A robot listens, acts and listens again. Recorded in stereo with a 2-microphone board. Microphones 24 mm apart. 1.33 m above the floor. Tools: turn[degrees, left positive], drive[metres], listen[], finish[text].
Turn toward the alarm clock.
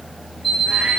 Action: turn[30]
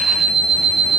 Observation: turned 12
Action: finish[Facing the alarm clock, over 4 m away.]